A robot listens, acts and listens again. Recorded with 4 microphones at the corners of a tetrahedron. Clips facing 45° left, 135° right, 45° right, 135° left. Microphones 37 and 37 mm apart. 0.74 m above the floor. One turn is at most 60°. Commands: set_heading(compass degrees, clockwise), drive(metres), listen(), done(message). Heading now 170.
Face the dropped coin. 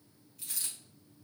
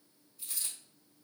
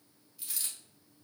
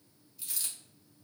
set_heading(135)
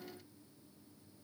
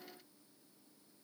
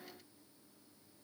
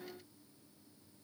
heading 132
done("I heard a dropped coin from this way, but can't make it out now.")